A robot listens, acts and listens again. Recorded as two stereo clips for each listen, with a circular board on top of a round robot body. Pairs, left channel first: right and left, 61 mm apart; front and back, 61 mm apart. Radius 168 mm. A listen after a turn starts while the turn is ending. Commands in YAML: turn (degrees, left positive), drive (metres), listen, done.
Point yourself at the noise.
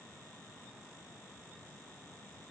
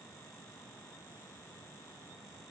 listen: true
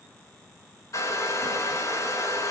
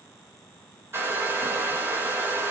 turn: -130
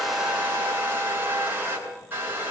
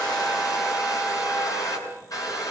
turn: 30
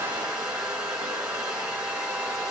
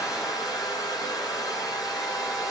turn: 15
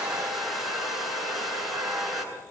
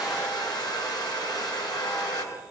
done: "Found it: a hair dryer, straight ahead, over 4 m away."